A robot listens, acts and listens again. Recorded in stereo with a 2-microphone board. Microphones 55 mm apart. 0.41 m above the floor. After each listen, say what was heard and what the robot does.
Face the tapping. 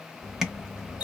Turn 30° right.
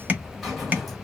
So it is at 140° right. Turn 140° right.
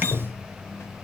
Keep listening.
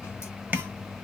The tapping is now 40° right. Turn 40° right.
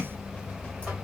Keep listening.
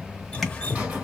Keep listening.
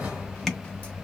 Facing where the tapping came from. I can't hear it now.